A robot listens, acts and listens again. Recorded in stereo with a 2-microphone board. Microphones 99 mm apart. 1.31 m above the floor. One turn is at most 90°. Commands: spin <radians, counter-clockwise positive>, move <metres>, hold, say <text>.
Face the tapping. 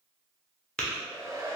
spin 0.52
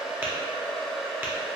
hold
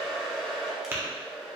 spin -0.44
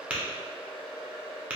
spin -0.26
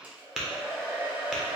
say Facing the tapping.